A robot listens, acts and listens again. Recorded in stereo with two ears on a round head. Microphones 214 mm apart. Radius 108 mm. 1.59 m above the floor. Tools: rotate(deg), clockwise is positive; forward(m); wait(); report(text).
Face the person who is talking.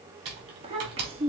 rotate(25)
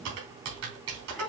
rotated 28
report("Facing the child speaking.")